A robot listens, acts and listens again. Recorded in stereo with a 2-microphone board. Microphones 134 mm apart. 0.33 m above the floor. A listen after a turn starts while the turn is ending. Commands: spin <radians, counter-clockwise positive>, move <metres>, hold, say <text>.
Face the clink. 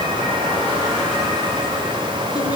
hold
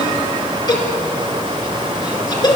hold
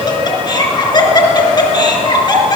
say I can't make out a clink to turn to.